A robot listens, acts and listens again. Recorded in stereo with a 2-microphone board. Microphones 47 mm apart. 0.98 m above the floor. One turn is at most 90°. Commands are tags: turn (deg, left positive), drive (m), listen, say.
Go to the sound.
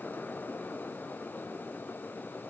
<listen/>
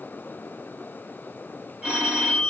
<turn deg="-30"/>
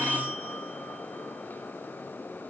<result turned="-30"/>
<turn deg="-90"/>
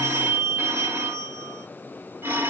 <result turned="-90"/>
<turn deg="-70"/>
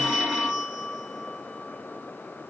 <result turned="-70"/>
<turn deg="-15"/>
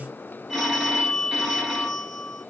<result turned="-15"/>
<drive m="1.0"/>
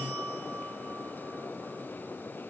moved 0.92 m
<turn deg="-10"/>
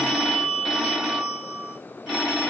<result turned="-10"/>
<drive m="1.0"/>
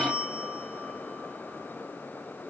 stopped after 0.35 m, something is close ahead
<say>I am next to the phone ringing.</say>